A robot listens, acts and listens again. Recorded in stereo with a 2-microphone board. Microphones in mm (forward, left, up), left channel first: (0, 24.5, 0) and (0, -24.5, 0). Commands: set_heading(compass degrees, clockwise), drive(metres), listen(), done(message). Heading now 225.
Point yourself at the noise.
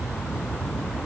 listen()
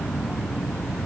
listen()
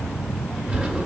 set_heading(250)
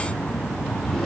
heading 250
done("Found it: a drawer, straight ahead, 2 to 4 m away.")